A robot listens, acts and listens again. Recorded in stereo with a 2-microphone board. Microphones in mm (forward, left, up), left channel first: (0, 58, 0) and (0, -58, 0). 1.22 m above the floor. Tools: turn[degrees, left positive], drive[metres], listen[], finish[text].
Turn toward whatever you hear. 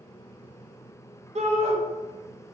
Thought: The shout: about 70° right or 110° right.
Action: turn[-70]
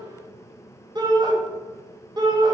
Thought: So it is at 40° right.
Action: turn[-40]
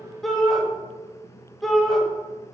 Action: finish[Facing the shout.]